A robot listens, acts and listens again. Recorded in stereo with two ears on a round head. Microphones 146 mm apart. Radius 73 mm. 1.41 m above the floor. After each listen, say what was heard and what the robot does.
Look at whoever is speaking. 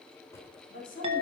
The woman speaking: about 55° left or 125° left. Turn 55° left.
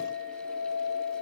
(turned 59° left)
Keep listening.
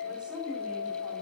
Keep listening.
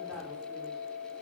I heard a woman speaking, but can't make it out now. It was about 5° right or 70° left.